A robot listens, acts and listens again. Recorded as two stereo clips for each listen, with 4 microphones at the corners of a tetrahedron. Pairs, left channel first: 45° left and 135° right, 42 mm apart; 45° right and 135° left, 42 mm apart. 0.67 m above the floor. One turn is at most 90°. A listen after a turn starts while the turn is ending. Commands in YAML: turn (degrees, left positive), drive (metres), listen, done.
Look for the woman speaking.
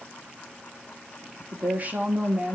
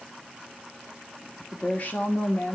turn: -80
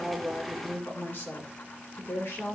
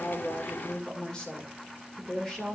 turn: 35
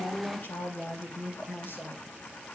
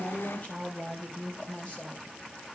turn: 10
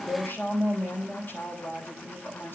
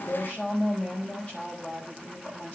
done: "Found it: a woman speaking, straight ahead, 2 to 4 m away."